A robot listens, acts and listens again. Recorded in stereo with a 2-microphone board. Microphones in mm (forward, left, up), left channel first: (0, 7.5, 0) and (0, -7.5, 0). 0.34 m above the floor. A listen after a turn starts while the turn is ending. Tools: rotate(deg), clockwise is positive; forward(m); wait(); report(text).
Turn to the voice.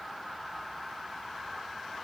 wait()
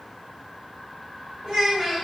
rotate(50)
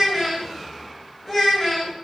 report("Found it: a child speaking, straight ahead, 1 to 2 m away.")